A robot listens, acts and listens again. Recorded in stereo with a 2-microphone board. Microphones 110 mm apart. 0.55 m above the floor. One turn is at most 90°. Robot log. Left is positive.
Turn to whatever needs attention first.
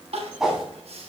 note: The crying: about 75° right or 105° right.
cmd yaw -75
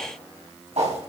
cmd idle
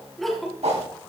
end: Facing the crying, 1 to 2 m away.